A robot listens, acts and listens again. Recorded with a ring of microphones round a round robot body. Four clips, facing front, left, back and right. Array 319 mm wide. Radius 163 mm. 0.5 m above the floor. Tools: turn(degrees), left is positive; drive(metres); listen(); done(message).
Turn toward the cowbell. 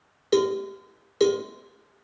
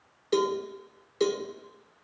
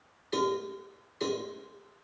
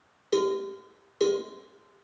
done("Facing the cowbell, 1 to 2 m away.")